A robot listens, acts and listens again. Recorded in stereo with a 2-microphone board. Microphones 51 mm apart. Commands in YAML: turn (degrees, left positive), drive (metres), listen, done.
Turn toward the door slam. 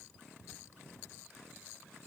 listen: true
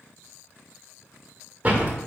turn: -30
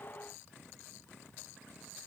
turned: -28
listen: true
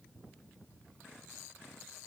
done: "I heard a door slam, but can't make it out now. It was about straight ahead or 125° right."